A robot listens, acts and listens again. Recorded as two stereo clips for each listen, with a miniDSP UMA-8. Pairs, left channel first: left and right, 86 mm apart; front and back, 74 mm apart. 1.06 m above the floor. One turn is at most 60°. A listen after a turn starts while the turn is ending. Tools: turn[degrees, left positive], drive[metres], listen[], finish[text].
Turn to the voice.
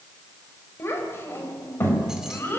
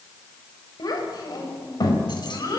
Thought: The child speaking: 25° left.
Action: turn[25]
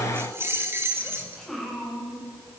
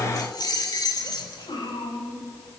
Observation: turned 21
Action: finish[Found it: a child speaking, straight ahead.]